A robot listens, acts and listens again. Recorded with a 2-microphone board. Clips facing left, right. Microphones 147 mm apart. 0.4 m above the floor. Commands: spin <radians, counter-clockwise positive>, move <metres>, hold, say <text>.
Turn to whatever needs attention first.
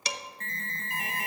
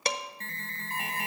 spin -0.61
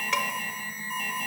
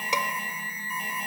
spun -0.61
say Facing the alarm.